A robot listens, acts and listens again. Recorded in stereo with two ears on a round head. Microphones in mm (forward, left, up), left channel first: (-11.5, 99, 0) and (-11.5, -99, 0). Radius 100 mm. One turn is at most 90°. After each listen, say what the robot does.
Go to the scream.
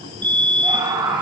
Turn 20° right.
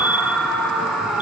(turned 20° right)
Drive 1.0 m forward.
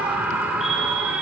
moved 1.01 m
Turn 10° right.
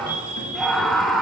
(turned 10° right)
Drive 1.0 m forward.
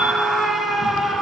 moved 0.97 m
Drive 1.0 m forward.
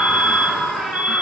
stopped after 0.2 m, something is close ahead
I am next to the scream.